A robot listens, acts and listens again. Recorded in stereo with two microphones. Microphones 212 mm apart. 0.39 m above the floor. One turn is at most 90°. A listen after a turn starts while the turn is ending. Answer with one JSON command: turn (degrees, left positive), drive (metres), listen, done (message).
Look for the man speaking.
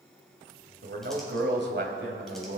{"turn": -50}
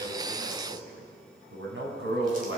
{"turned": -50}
{"turn": -70}
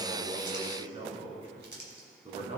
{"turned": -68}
{"turn": -30}
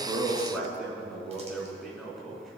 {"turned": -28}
{"done": "Found it: a man speaking, straight ahead, 2 to 4 m away."}